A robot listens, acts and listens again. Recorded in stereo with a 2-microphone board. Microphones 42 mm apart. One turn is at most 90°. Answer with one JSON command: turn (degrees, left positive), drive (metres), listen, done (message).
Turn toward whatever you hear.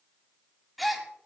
{"turn": 30}
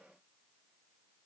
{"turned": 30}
{"listen": true}
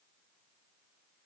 {"done": "I heard a gasp, but can't make it out now. It was about 30° right or 150° left."}